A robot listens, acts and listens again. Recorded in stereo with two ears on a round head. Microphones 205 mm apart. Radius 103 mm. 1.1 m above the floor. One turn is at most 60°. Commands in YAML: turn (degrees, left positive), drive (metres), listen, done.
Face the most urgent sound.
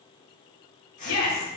turn: 60
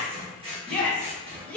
done: "Facing the shout."